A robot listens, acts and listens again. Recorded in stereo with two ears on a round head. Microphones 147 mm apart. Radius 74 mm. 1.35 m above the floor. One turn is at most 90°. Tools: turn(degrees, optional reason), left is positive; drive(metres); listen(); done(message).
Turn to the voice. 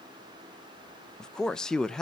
turn(degrees=30)
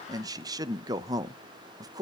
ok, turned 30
turn(degrees=-25, reason="So it is at 25° right.")
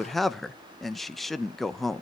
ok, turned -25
done("Facing the man speaking, under 1 m away.")